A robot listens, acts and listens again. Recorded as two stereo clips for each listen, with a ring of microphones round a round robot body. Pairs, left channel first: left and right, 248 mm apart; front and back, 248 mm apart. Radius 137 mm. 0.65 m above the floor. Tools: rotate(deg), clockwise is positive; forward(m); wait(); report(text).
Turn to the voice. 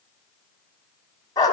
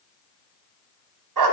wait()
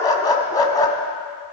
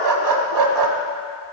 wait()
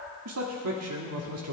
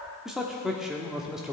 rotate(90)
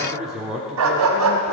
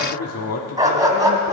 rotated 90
report("Facing the man speaking, 1 to 2 m away.")